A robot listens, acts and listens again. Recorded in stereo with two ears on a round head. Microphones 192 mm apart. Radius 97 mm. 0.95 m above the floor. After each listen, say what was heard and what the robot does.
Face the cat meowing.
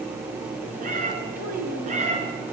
The cat meowing: about 35° right or 145° right. Turn 35° right.
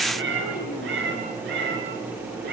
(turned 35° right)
So it is at 125° right. Turn 125° right.
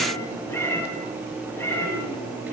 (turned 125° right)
The cat meowing is now 10° left. Turn 10° left.
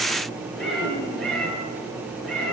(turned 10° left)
Facing the cat meowing.